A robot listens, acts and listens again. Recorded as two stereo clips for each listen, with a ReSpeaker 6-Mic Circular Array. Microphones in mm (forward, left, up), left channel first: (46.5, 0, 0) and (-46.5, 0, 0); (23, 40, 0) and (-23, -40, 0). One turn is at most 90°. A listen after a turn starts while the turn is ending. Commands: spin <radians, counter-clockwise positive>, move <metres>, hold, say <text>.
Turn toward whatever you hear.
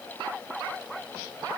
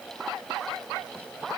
hold
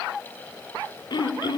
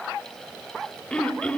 spin -0.26
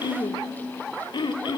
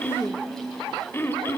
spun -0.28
say Facing the throat clearing, 1 to 2 m away.